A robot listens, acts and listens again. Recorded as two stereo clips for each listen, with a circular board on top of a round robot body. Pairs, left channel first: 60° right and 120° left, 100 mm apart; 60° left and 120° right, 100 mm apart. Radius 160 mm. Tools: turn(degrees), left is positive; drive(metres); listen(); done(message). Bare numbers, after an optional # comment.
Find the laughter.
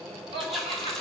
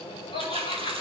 # The laughter: 95° left.
turn(95)
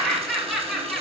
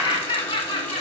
# The laughter is now 35° left.
turn(35)
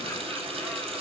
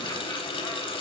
listen()
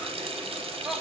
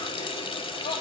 # The laughter is now 30° left.
turn(30)
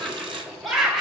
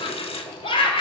# The laughter is now 35° left.
turn(35)
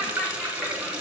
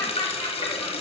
done("Found it: laughter, straight ahead.")